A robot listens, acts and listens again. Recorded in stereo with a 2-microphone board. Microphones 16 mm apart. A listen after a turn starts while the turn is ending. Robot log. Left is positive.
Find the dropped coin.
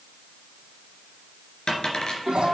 note: The dropped coin: about 45° left or 135° left.
cmd yaw +45
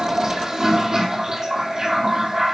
cmd idle
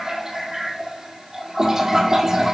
end: I heard a dropped coin, but can't make it out now. It was about straight ahead or 90° left.